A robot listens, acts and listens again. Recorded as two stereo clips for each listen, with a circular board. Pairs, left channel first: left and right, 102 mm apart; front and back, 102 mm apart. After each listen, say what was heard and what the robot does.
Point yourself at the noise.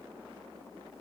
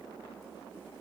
Keep listening.
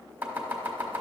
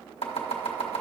The chopping: 15° right. Turn 15° right.
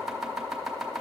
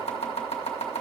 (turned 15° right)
Facing the chopping.